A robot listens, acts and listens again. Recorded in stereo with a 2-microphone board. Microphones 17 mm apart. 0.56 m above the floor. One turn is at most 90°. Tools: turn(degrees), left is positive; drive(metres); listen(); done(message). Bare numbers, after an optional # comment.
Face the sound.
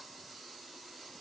listen()
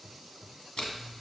turn(90)
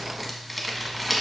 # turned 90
done("Found it: crumpling, straight ahead, 1 to 2 m away.")